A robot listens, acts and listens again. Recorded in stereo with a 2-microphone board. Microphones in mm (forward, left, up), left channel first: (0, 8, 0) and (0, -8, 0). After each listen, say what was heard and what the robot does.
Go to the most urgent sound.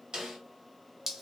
Keep listening.
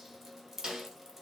Keep listening.
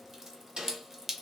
I can't make out anything urgent to turn to.